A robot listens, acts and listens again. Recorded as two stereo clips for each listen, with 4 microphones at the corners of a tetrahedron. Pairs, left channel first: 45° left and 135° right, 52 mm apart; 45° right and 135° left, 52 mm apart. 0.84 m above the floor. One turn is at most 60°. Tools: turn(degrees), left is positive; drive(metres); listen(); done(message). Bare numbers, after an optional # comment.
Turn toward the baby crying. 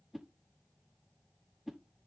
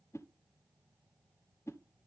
listen()
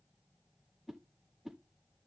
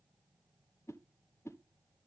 listen()
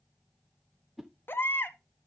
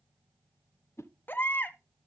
done("Facing the baby crying.")